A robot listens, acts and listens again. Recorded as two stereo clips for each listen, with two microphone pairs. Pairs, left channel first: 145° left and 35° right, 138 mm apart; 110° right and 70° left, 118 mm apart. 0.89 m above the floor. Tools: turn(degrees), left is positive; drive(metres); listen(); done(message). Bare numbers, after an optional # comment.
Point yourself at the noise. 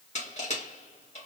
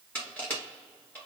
# The crushing: 175° left.
turn(175)
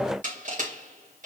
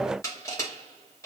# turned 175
# The crushing is now 50° right.
turn(-50)
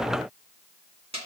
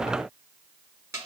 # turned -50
done("Found it: crushing, straight ahead, 2 to 4 m away.")